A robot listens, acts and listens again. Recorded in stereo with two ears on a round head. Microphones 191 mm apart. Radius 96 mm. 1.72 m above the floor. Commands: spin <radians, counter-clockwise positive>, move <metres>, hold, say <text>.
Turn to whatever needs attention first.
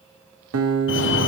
spin 1.05
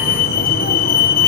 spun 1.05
spin 0.87
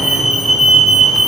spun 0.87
say Found it: a fire alarm, straight ahead, 1 to 2 m away.